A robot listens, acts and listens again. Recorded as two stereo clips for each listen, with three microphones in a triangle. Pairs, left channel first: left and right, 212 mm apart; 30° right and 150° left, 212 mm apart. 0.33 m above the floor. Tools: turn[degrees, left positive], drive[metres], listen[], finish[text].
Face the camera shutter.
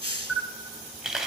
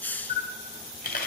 Action: finish[Found it: a camera shutter, straight ahead, 1 to 2 m away.]